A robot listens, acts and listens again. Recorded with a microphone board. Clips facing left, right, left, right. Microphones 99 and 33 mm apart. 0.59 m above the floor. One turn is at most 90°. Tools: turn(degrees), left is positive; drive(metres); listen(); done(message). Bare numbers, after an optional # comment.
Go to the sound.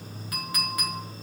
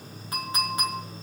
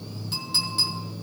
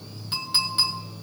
# The clink: about 25° right or 155° right.
turn(-25)
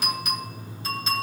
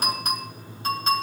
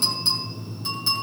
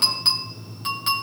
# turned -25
# So it is at 130° right.
turn(-90)
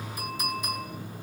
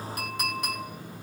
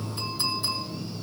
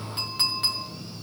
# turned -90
# The clink is now 70° right.
turn(-70)
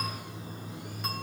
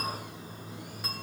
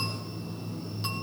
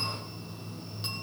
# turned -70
listen()
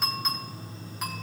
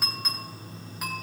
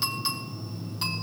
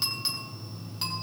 drive(1.0)
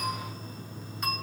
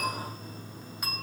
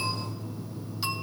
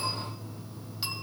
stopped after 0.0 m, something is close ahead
done("Something is in my way. I am facing the clink but have not reached it.")